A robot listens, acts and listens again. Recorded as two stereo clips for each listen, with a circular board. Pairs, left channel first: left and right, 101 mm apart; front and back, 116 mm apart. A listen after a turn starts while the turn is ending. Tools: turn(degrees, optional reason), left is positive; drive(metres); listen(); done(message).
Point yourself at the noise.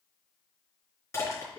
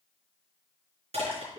turn(degrees=150, reason="The crushing: 150° left.")
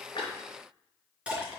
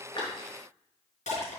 turn(degrees=-10, reason="The crushing is now 10° right.")
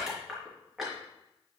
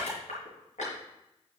done("Found it: crushing, straight ahead.")